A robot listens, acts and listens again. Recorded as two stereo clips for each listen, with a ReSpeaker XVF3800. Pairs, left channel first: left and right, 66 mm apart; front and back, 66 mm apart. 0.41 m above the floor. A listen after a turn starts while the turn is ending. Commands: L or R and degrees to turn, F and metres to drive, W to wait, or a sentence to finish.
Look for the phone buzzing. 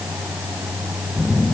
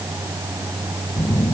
L45
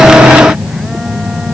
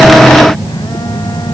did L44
Facing the phone buzzing.